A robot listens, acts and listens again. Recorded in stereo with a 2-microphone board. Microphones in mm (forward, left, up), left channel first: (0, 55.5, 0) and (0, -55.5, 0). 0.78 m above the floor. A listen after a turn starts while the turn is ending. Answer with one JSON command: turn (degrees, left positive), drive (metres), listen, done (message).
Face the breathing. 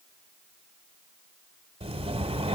{"turn": -65}
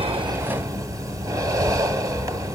{"turn": -35}
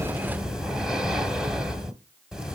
{"done": "Facing the breathing."}